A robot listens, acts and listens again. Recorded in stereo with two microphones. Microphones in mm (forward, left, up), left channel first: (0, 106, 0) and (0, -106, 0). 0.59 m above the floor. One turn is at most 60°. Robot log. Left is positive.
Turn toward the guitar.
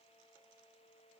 cmd idle
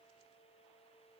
cmd idle
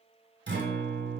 note: The guitar: about 60° right or 120° right.
cmd yaw -60
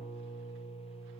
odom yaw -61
note: So it is at 15° right.
cmd yaw -15
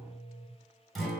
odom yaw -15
end: Found it: a guitar, straight ahead, under 1 m away.